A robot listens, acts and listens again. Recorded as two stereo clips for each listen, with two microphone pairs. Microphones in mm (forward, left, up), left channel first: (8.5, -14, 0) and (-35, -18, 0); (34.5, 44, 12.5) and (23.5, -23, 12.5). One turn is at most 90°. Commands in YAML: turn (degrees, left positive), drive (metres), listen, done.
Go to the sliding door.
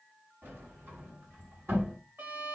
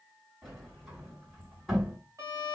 turn: 90
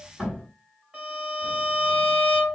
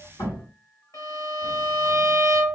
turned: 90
turn: 70
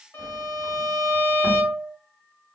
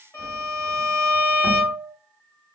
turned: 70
listen: true
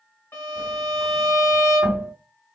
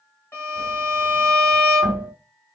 turn: -20
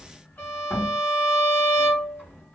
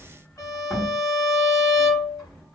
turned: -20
drive: 1.0
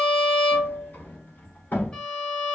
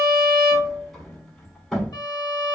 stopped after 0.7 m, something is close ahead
done: "Arrived at the sliding door, straight ahead."